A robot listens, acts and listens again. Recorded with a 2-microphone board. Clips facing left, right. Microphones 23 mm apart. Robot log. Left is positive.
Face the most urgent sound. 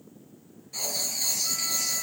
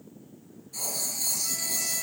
cmd idle
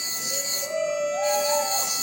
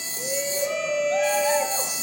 note: The shout: about 70° right or 110° right.
cmd yaw -70
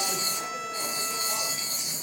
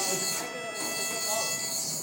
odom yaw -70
cmd idle
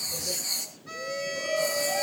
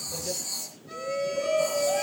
end: Found it: a shout, straight ahead.